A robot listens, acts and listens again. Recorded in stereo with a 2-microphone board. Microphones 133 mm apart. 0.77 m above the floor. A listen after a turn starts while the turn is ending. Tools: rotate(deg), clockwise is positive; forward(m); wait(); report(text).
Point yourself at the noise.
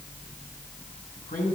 rotate(-90)
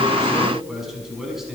report("Found it: a man speaking, straight ahead.")